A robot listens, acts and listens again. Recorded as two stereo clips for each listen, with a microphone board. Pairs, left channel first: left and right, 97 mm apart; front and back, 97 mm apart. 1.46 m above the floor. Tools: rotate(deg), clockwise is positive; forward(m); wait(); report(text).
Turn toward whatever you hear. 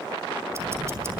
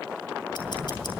rotate(30)
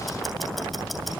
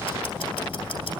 report("Facing the ticking, 2 to 4 m away.")